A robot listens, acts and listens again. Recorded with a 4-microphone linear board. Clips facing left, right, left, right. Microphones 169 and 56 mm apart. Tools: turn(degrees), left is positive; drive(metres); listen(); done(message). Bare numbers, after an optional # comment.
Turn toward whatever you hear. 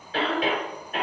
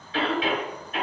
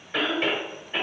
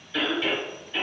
# The cough: about 45° left or 135° left.
turn(45)
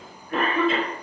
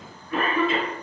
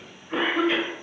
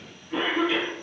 # So it is at 75° left.
turn(75)
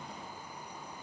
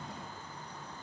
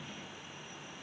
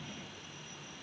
listen()
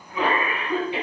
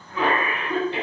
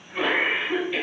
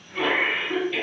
# The cough is now 15° left.
turn(15)
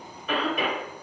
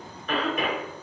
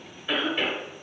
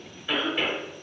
done("Facing the cough, 1 to 2 m away.")